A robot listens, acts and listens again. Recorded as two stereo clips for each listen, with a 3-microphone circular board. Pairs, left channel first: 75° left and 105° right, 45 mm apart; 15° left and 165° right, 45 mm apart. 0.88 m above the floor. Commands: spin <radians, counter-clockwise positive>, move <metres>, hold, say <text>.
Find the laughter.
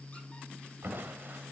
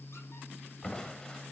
hold
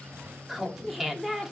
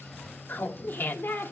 spin -0.35
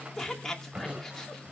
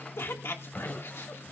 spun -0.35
say Found it: laughter, straight ahead.